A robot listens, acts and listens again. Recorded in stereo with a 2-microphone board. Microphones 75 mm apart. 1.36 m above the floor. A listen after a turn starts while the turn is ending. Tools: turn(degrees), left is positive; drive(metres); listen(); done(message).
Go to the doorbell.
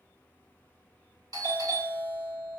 turn(degrees=-55)
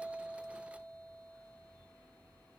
listen()
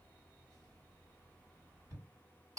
turn(degrees=-60)
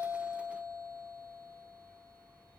turn(degrees=20)
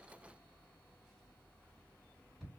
drive(metres=1.0)
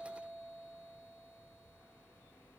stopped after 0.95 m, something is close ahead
done("Arrived at the doorbell, straight ahead.")